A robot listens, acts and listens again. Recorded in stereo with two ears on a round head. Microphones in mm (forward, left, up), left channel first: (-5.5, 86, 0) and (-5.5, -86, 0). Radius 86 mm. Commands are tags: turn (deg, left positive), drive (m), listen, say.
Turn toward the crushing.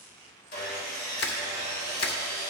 <turn deg="55"/>
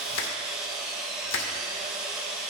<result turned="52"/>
<turn deg="65"/>
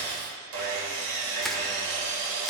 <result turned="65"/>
<say>Found it: crushing, straight ahead, 1 to 2 m away.</say>